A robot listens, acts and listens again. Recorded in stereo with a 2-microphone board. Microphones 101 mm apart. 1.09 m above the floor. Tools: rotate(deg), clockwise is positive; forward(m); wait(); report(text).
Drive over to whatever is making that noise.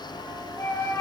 rotate(-25)
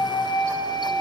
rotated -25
rotate(-130)
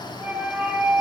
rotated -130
rotate(15)
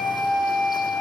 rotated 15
forward(1.0)
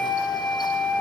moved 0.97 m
rotate(-10)
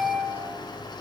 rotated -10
forward(1.0)
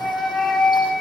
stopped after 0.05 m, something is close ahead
report("Blocked. The flute is further on, straight ahead.")